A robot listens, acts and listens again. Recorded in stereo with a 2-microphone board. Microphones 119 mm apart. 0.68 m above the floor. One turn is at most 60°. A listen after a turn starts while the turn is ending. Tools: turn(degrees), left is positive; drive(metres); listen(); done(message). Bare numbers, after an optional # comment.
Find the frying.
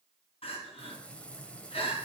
turn(30)
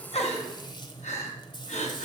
# So it is at 140° left.
turn(60)
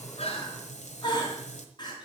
# The frying is now 80° left.
turn(60)
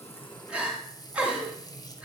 # The frying is now 30° left.
turn(30)
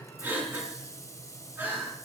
# The frying is now 25° left.
turn(25)
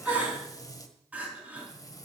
# The frying is now 30° left.
turn(30)
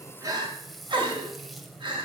done("Facing the frying.")